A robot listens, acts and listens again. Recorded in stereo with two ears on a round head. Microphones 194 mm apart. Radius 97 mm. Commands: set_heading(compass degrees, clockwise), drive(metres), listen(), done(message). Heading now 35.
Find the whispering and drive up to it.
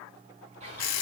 set_heading(65)
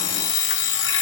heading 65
listen()
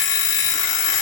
listen()
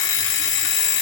done("I heard whispering, but can't make it out now. It was about straight ahead or 120° right. I did not reach it.")